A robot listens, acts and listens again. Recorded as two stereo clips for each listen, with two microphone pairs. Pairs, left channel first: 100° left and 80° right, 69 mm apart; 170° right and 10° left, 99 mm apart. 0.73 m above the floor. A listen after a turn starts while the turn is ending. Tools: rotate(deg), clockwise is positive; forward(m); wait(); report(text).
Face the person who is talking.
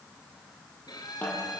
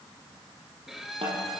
wait()
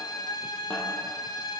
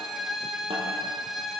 wait()
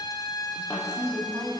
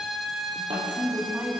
rotate(65)
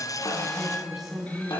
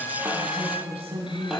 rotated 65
report("Found it: a woman speaking, straight ahead.")